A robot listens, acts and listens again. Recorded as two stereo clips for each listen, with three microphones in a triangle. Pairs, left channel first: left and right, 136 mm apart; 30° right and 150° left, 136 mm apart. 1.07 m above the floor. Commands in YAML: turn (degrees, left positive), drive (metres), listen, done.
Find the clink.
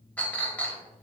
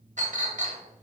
turn: 170
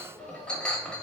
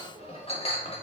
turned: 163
turn: 10
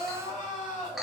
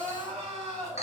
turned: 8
done: "Found it: a clink, straight ahead."